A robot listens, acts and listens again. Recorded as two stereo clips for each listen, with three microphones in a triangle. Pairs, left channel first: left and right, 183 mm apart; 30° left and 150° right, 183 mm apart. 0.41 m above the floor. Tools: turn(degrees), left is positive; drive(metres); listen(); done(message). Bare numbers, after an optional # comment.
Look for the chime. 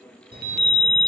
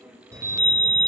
# The chime: 80° right.
turn(-80)
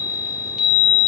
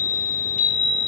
done("Found it: a chime, straight ahead.")